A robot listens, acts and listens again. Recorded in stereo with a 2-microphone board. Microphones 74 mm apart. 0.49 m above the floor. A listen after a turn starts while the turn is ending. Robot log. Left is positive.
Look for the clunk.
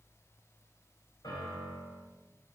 cmd idle
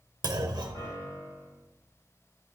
note: The clunk: about 60° right or 120° right.
cmd yaw -60
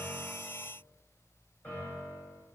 cmd idle
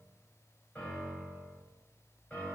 end: I heard a clunk, but can't make it out now. It was about straight ahead or 60° right.